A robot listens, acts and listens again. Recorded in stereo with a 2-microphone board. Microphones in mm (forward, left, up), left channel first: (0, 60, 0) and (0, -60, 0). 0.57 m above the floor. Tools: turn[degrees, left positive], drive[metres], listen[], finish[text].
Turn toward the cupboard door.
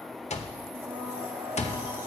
Action: listen[]
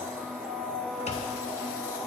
Action: listen[]
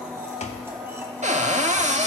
Action: turn[-90]
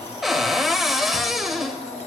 Action: finish[Found it: a cupboard door, straight ahead, under 1 m away.]